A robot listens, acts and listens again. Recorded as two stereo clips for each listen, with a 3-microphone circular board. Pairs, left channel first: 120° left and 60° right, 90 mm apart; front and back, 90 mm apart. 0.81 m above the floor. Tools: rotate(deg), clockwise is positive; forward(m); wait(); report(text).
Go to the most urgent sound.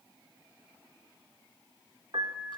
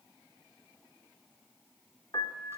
wait()
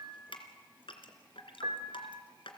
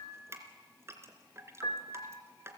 wait()
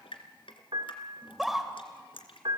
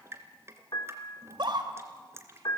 rotate(150)
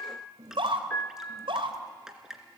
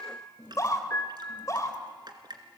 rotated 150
rotate(55)
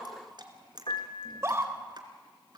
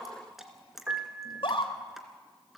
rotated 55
forward(1.0)
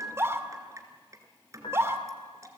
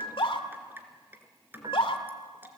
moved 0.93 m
forward(1.0)
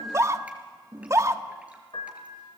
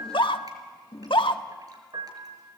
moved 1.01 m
rotate(10)
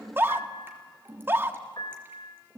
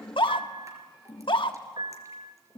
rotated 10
forward(1.0)
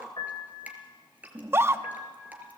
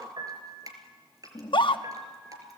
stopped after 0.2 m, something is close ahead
report("Arrived at the scream, straight ahead.")